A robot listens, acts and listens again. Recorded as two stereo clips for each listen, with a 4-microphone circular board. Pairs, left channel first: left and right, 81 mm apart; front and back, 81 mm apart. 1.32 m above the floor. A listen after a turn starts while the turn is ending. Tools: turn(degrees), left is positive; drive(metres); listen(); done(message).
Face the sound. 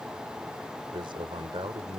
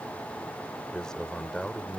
turn(degrees=-80)
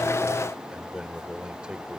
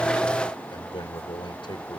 turn(degrees=-10)
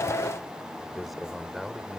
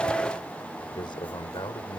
done("Facing the man speaking.")